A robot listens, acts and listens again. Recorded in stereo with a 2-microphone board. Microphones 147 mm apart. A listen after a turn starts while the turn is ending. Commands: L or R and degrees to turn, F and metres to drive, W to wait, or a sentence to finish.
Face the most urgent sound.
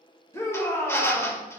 L20
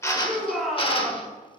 Found it: a shout, straight ahead, 1 to 2 m away.